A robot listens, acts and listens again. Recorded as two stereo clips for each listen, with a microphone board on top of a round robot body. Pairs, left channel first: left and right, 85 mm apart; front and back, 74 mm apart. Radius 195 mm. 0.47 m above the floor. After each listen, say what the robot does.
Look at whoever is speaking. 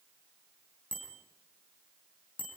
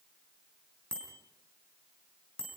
Keep listening.
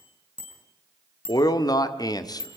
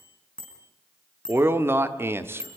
Turn 125° left.
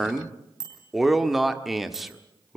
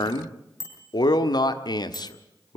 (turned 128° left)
Found it: a man speaking, straight ahead, 1 to 2 m away.